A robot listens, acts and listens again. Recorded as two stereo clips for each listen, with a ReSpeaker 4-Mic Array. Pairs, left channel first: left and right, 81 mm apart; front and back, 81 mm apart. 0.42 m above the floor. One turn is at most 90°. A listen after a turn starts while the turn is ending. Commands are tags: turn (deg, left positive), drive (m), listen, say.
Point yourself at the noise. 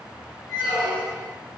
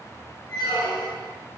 <turn deg="-20"/>
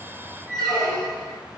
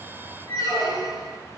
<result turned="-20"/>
<say>Facing the squeak.</say>